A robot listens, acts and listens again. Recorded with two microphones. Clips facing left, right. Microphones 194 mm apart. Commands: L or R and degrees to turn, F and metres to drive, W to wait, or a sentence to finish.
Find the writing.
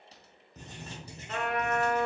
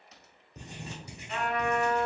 R30
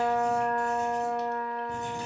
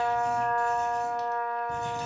L15
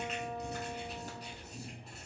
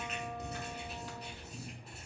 Facing the writing, 1 to 2 m away.